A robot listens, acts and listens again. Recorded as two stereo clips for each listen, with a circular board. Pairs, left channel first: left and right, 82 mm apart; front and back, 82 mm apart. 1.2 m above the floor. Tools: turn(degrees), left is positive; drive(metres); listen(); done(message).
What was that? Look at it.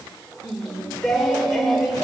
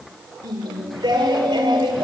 turn(degrees=180)
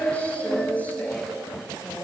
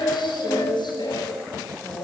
turn(degrees=20)
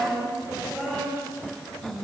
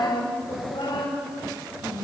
done("Facing the singing.")